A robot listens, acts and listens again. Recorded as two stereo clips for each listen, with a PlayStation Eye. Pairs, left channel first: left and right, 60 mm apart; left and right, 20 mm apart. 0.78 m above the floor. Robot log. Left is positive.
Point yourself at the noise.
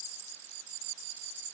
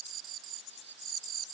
cmd idle
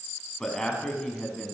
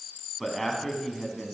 cmd yaw +30
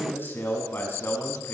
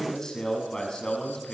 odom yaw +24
note: So it is at 145° left.
cmd yaw +145
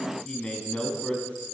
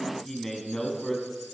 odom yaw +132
note: The man speaking is now 15° left.
cmd yaw +15
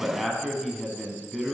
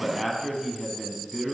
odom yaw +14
end: Facing the man speaking, over 4 m away.